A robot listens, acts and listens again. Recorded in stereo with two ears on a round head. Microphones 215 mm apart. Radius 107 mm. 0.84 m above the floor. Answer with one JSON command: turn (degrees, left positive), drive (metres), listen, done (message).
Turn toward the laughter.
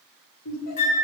{"turn": 90}
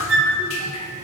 {"listen": true}
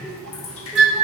{"listen": true}
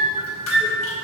{"done": "I heard laughter from this way, but can't make it out now."}